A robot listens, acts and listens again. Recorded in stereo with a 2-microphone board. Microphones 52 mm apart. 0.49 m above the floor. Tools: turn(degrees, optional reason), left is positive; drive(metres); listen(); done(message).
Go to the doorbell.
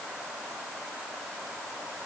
listen()
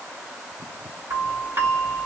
turn(degrees=-55, reason="The doorbell: about 55° right or 125° right.")
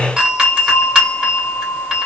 turn(degrees=-20, reason="So it is at 20° right.")
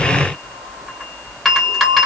drive(metres=1.0)
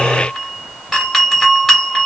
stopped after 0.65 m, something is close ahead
done("Arrived at the doorbell, straight ahead.")